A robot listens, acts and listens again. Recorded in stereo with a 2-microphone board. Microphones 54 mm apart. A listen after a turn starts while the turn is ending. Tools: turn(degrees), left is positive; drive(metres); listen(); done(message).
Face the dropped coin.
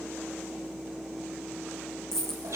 turn(degrees=30)
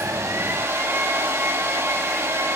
listen()
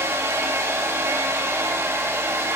done("I heard a dropped coin, but can't make it out now. It was about 20° right or 140° left.")